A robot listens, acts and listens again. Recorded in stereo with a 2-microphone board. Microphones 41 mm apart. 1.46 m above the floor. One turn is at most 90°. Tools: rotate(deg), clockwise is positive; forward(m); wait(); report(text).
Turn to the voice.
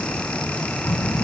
rotate(-90)
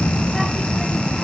report("Found it: a child speaking, straight ahead.")